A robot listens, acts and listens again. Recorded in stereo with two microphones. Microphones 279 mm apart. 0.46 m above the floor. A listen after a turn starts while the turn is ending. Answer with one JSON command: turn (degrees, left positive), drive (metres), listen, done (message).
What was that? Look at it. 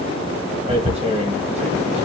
{"turn": -25}
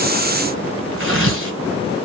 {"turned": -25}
{"turn": -130}
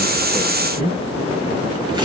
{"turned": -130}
{"turn": -15}
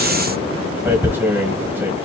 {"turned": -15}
{"turn": -10}
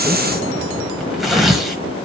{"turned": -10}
{"done": "Facing the tearing paper."}